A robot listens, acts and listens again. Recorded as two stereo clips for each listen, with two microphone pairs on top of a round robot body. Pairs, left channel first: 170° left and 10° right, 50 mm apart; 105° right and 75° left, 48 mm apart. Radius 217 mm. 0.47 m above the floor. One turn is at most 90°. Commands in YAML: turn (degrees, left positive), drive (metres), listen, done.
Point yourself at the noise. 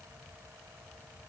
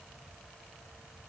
listen: true
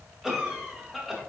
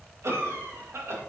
turn: 70
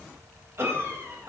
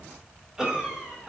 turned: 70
done: "Facing the cough, 2 to 4 m away."